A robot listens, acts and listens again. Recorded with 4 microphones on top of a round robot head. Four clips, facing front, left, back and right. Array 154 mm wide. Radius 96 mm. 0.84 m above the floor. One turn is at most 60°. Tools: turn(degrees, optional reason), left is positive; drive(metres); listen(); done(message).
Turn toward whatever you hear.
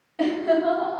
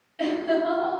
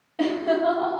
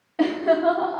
turn(degrees=-60, reason="The laughter: 115° right.")
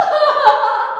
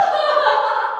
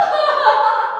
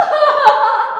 turn(degrees=-60, reason="The laughter is now 80° right.")
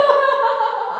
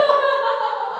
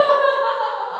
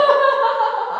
turn(degrees=-50, reason="The laughter is now 50° right.")
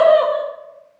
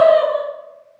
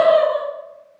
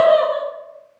turn(degrees=-20, reason="The laughter is now 20° right.")
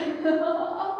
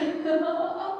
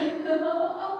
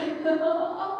turn(degrees=-15, reason="The laughter is now 15° right.")
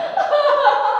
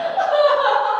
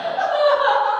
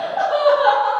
done("Facing the laughter, 2 to 4 m away.")